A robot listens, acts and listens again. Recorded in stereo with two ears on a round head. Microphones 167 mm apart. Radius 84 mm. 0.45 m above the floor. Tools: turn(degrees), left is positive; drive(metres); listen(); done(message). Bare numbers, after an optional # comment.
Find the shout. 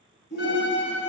# The shout: about 65° left or 115° left.
turn(65)
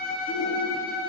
listen()
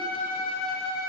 listen()
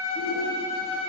done("I heard a shout, but can't make it out now. It was about straight ahead or 50° left.")